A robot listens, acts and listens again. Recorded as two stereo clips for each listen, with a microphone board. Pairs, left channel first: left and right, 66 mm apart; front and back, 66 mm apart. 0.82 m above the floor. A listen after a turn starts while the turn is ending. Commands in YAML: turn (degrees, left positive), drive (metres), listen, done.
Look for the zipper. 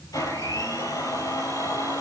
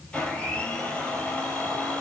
listen: true
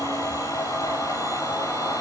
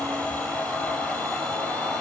listen: true
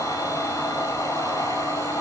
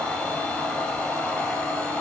done: "I can't make out a zipper to turn to."